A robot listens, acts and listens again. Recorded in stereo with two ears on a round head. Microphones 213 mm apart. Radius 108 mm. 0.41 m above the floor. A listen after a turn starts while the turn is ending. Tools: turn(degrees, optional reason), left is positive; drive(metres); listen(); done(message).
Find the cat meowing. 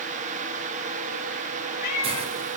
turn(degrees=90)
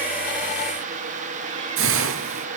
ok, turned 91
listen()
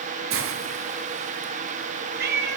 turn(degrees=-40, reason="The cat meowing is now 40° right.")
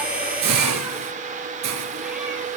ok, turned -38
listen()
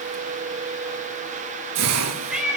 done("Facing the cat meowing, 2 to 4 m away.")